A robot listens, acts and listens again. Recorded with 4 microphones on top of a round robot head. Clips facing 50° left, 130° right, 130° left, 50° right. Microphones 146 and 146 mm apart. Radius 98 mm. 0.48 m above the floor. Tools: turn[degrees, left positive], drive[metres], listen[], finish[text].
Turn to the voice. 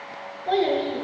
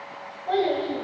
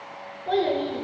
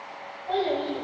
Thought: The child speaking: 100° left.
Action: turn[100]
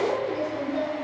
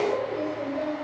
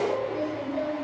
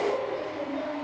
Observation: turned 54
Thought: The child speaking is now 50° left.
Action: turn[50]
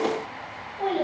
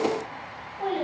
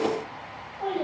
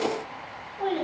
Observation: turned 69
Thought: The child speaking is now 20° right.
Action: turn[-20]
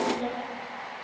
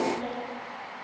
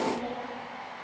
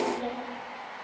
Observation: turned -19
Action: finish[Facing the child speaking.]